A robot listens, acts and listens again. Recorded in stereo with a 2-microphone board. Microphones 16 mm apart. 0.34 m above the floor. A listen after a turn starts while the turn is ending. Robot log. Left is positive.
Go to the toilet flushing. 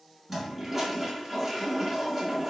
cmd yaw -30
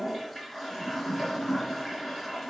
note: So it is at 15° left.
cmd yaw +15
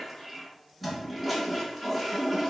cmd fwd 1.0
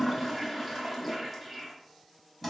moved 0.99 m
cmd fwd 1.0
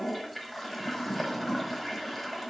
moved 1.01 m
cmd fwd 1.0
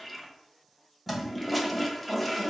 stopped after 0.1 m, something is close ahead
end: Arrived at the toilet flushing, straight ahead.